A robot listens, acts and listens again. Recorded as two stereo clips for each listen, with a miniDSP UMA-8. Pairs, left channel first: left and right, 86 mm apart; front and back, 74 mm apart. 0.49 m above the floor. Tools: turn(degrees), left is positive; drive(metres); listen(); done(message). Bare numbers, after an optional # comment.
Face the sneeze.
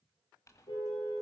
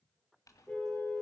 listen()
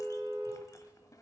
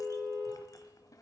listen()
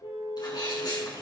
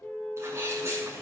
# The sneeze: 125° left.
turn(125)
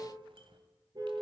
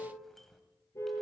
done("Facing where the sneeze came from. I can't hear it now.")